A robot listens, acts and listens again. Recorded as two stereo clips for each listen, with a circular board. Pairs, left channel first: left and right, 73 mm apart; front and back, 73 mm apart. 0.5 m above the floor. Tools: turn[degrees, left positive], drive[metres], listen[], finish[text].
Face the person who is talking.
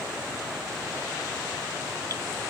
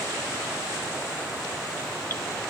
Action: listen[]
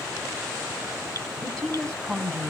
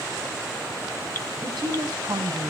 Thought: The woman speaking: 170° left.
Action: turn[170]
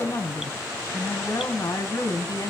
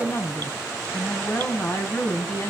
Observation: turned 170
Thought: The woman speaking is now 55° left.
Action: turn[55]
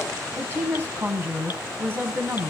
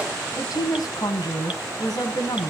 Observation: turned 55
Thought: The woman speaking is now 25° right.
Action: turn[-25]
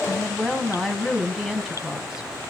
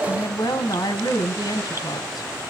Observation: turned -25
Action: finish[Facing the woman speaking.]